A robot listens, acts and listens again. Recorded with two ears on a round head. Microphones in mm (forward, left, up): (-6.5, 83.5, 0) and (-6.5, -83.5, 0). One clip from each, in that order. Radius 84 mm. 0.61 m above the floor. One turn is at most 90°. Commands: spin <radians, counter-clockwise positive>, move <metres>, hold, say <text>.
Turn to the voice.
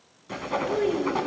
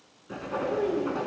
spin 0.79
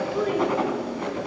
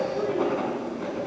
spin 1.13
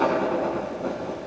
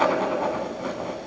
hold
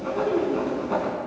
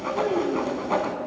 spin -0.35
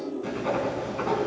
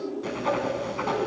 say Found it: a child speaking, straight ahead, 2 to 4 m away.